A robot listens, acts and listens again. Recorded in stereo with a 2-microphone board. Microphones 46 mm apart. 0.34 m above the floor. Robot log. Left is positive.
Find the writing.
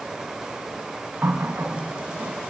cmd idle
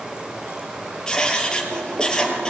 note: The writing: about 15° left or 165° left.
cmd yaw +15
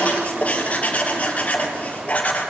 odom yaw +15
note: So it is at 150° left.
cmd yaw +150
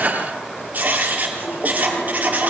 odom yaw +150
note: The writing is now 35° right.
cmd yaw -35
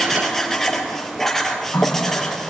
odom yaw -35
note: The writing is now 10° left.
cmd yaw +10
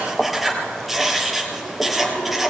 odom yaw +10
end: Found it: writing, straight ahead, 2 to 4 m away.